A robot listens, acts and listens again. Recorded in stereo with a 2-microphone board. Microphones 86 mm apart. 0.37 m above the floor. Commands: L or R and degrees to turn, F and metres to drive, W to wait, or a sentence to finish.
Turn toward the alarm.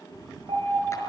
R75
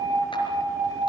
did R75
R25
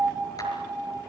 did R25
Found it: an alarm, straight ahead, over 4 m away.